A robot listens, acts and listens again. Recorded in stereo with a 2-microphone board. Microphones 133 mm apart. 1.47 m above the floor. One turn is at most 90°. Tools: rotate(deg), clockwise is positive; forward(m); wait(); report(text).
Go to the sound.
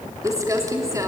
rotate(25)
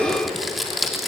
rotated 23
forward(1.0)
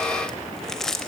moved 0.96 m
forward(1.0)
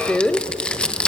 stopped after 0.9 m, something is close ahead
report("Arrived at the crumpling, straight ahead.")